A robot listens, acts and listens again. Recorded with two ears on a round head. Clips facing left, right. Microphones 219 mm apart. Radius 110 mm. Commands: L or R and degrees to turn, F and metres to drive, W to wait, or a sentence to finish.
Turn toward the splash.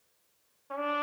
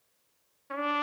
W
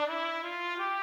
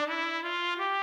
W
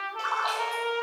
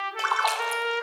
R70
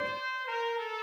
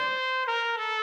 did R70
W
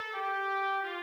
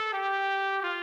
I heard a splash, but can't make it out now. It was about straight ahead or 40° right.